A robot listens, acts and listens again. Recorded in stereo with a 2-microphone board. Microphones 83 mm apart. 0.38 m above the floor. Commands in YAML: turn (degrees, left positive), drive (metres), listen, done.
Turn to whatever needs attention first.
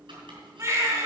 turn: -35
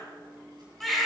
done: "Found it: a baby crying, straight ahead, 2 to 4 m away."